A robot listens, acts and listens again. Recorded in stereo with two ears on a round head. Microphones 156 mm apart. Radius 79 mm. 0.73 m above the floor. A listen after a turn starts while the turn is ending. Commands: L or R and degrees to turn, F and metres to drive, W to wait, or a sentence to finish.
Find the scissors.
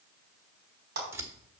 R30
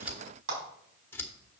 L15
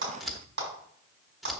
Found it: scissors, straight ahead.